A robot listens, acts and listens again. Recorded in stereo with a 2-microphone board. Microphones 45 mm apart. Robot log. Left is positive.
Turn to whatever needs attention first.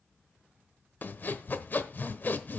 cmd idle
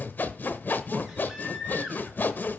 cmd yaw -30
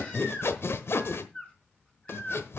note: So it is at 25° left.
cmd yaw +25
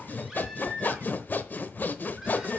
note: The baby crying is now 10° right.
cmd yaw -10
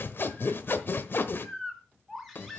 end: Facing the baby crying.